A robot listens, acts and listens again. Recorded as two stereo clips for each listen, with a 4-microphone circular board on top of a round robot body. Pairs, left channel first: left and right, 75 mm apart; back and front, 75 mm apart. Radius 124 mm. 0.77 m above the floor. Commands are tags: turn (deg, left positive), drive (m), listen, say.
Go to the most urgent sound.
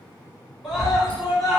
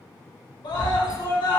<turn deg="-175"/>
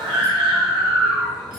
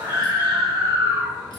<drive m="1.0"/>
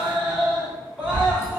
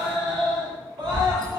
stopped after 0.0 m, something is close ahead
<turn deg="-10"/>
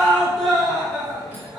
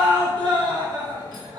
<say>Blocked. The scream is further on, straight ahead.</say>